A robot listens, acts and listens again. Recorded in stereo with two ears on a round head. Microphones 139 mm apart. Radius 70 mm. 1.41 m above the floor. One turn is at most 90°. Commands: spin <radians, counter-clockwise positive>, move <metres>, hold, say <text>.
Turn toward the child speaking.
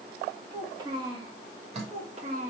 spin -0.87
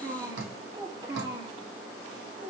spin -0.70
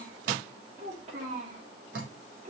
spin -0.79
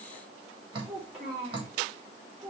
say Found it: a child speaking, straight ahead, 2 to 4 m away.